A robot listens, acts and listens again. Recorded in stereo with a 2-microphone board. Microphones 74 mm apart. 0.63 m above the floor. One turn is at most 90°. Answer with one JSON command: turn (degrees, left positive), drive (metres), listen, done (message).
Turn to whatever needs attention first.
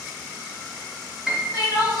{"turn": 90}
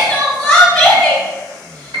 {"done": "Found it: crying, straight ahead, 1 to 2 m away."}